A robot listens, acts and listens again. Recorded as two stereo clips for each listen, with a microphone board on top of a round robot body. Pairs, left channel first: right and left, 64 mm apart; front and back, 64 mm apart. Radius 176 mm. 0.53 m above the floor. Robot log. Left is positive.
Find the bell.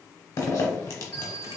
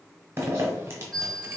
note: The bell: 80° right.
cmd yaw -80
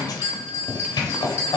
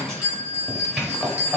note: The bell is now 40° right.
cmd yaw -40
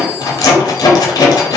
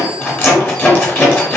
cmd idle
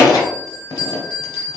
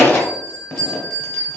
note: The bell is now 20° right.
cmd yaw -20
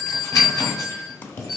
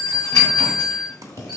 end: Facing the bell.